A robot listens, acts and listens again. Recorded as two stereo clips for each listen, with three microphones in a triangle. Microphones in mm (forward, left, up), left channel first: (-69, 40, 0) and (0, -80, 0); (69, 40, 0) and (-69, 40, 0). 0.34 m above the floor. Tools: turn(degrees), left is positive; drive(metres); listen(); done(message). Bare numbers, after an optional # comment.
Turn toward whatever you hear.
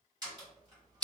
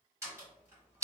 # The door slam: 115° right.
turn(-115)
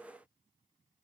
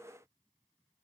done("I heard a door slam from this way, but can't make it out now.")